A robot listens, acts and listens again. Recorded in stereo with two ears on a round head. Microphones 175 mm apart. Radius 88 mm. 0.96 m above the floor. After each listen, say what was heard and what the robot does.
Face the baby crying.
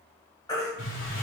The baby crying: about 20° left or 160° left. Turn 20° left.
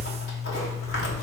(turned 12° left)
Keep listening.
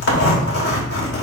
Keep listening.
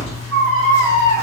Found it: a baby crying, straight ahead.